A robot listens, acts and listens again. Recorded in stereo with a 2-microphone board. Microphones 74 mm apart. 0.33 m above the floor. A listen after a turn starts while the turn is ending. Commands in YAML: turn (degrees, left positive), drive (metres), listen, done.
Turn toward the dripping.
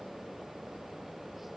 listen: true
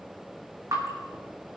turn: -55
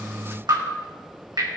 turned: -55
turn: -75
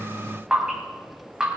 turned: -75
turn: -15
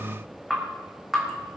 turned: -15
done: "Found it: dripping, straight ahead."